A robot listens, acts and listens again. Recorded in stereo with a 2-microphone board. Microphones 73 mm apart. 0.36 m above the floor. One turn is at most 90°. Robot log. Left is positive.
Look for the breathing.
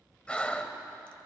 note: The breathing: about 15° left or 165° left.
cmd yaw +15
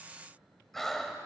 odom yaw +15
end: Found it: breathing, straight ahead, under 1 m away.